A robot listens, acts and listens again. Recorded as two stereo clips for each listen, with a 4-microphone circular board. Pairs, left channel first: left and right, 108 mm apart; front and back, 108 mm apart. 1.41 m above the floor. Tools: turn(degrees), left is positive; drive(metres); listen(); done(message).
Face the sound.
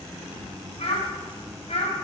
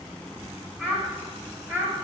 turn(degrees=110)
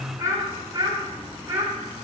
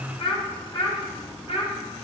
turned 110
turn(degrees=-25)
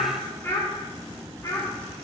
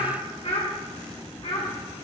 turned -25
turn(degrees=30)
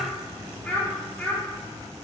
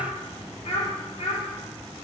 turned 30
turn(degrees=15)
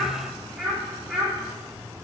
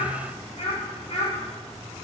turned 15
done("Found it: a child speaking, straight ahead, 2 to 4 m away.")